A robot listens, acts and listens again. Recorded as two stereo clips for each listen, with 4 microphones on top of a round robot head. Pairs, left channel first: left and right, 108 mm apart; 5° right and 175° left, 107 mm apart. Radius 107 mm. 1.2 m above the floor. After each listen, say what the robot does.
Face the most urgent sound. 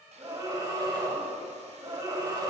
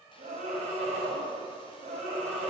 Turn 145° right.
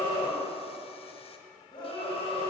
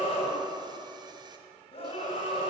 Turn 35° left.
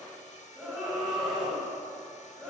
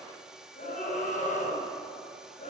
Found it: a scream, straight ahead.